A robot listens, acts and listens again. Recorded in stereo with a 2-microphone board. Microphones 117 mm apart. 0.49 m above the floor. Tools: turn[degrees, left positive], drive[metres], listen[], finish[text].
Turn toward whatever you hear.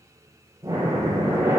Thought: The breathing: about 25° right or 155° right.
Action: turn[-25]
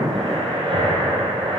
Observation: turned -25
Thought: So it is at 130° right.
Action: turn[-130]
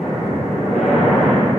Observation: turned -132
Action: finish[Facing the breathing.]